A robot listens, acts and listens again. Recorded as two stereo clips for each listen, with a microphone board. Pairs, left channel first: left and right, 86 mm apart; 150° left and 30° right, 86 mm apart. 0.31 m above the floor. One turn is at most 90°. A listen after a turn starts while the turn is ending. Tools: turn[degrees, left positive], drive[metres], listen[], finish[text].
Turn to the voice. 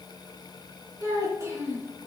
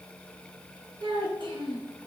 Thought: The child speaking: 35° right.
Action: turn[-35]
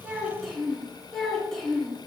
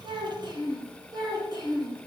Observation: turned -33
Thought: The child speaking is now 10° left.
Action: turn[10]
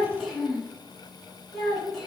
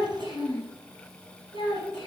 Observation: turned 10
Action: finish[Facing the child speaking.]